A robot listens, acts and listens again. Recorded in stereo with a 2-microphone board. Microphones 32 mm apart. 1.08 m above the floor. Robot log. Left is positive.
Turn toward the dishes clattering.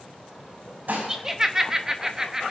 note: The dishes clattering: about 60° right or 120° right.
cmd yaw -60
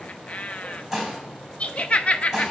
end: Facing the dishes clattering.